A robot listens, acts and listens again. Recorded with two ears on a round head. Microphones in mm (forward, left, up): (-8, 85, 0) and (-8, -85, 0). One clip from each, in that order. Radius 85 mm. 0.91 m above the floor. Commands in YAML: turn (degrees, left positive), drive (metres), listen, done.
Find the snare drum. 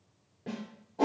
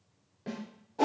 turn: -35
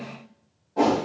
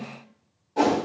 done: "Found it: a snare drum, straight ahead."